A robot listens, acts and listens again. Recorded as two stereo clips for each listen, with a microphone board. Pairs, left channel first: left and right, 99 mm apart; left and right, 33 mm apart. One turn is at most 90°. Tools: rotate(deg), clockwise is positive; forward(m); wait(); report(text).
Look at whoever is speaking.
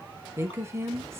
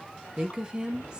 rotate(25)
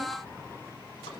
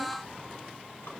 wait()
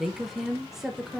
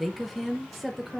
report("Found it: a woman speaking, straight ahead, under 1 m away.")